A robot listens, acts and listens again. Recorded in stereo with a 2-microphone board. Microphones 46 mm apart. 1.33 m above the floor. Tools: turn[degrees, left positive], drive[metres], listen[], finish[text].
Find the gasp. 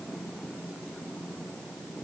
Action: listen[]
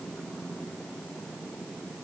Action: listen[]
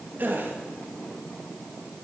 Thought: The gasp: about 45° right or 135° right.
Action: turn[-45]
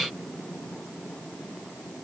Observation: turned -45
Action: listen[]
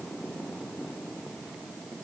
Action: finish[I heard a gasp, but can't make it out now. It was about straight ahead or 90° right.]